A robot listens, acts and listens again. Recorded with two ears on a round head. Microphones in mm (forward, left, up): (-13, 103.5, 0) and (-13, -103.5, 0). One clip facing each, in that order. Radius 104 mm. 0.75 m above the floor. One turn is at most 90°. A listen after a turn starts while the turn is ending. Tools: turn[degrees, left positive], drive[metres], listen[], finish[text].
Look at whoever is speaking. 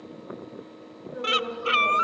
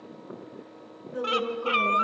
Thought: The woman speaking: about 55° right or 125° right.
Action: turn[-55]
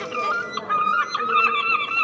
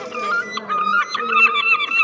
Action: listen[]
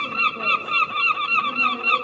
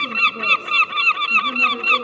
Action: listen[]
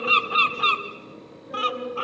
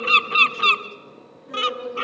Thought: So it is at 50° right.
Action: turn[-50]
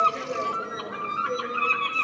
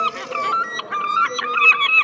Action: listen[]
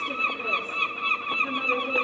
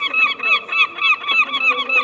Action: listen[]
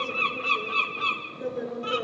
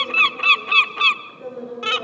Thought: The woman speaking is now 10° left.
Action: turn[10]
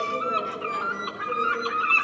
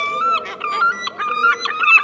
Action: listen[]
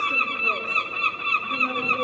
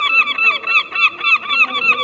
Action: listen[]
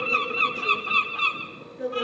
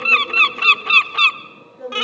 Action: finish[Facing the woman speaking.]